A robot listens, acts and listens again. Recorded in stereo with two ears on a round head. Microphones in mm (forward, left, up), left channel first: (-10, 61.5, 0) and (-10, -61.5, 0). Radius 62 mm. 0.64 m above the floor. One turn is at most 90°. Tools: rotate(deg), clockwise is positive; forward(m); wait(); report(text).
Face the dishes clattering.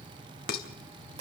rotate(-90)
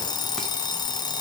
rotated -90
wait()
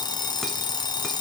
wait()
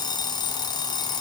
report("I heard dishes clattering from this way, but can't make it out now.")